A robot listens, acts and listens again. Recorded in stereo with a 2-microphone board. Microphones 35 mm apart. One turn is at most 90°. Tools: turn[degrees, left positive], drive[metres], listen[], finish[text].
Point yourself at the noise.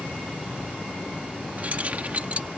Thought: The keys jangling: about 45° right or 135° right.
Action: turn[-45]
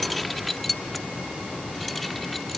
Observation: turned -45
Action: finish[Facing the keys jangling.]